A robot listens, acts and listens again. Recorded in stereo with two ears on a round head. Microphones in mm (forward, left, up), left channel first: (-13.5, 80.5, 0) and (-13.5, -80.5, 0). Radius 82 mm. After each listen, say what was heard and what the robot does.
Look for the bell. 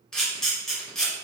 Keep listening.
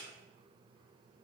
Keep listening.
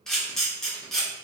I can't make out a bell, only a camera shutter.